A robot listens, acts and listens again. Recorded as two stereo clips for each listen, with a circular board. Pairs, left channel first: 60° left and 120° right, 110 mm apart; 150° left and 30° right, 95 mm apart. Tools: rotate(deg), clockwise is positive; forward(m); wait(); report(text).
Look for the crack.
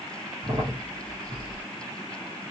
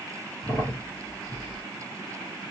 rotate(160)
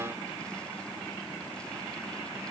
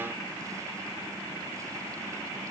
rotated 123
rotate(35)
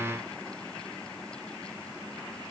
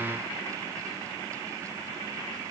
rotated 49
rotate(-10)
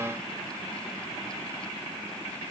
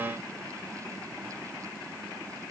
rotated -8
report("I heard a crack from this way, but can't make it out now.")